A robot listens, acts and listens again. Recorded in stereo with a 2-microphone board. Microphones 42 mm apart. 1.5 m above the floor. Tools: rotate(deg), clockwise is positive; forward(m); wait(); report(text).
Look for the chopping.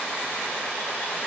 wait()
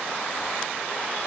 wait()
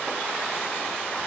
report("I can't make out chopping.")